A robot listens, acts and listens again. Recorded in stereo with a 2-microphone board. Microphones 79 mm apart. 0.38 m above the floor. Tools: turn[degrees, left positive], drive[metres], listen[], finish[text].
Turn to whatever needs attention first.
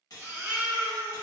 Thought: The baby crying: about 25° right or 155° right.
Action: turn[-25]
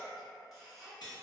Action: listen[]
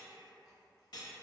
Action: listen[]
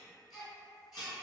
Action: finish[Found it: a baby crying, straight ahead.]